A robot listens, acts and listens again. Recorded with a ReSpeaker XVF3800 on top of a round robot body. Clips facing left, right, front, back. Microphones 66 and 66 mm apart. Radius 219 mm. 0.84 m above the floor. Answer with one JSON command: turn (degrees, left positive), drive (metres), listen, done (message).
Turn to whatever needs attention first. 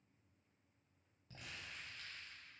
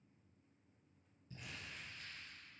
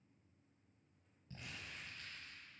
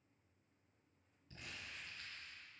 {"listen": true}
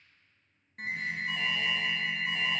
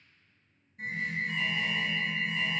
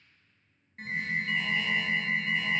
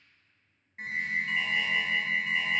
{"turn": 100}
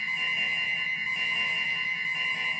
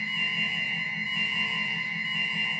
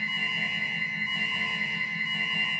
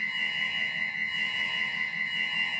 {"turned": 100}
{"turn": 15}
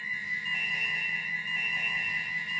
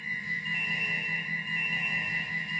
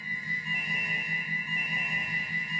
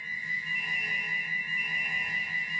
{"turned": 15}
{"done": "Found it: an alarm, straight ahead, 1 to 2 m away."}